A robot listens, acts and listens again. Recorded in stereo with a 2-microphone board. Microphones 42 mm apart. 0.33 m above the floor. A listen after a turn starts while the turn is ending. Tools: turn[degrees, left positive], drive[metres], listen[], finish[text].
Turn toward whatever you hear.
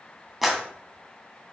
Action: turn[-30]
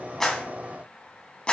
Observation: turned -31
Thought: So it is at 30° left.
Action: turn[30]
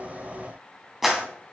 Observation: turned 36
Action: finish[Facing the clap, 2 to 4 m away.]